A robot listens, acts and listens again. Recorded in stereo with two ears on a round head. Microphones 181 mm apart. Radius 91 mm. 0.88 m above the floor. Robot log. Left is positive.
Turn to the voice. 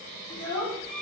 cmd yaw +30
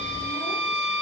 cmd idle
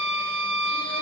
cmd idle
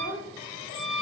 note: So it is at 15° right.
cmd yaw -15
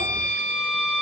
cmd idle
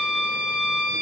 cmd idle
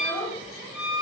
end: Facing the child speaking, 1 to 2 m away.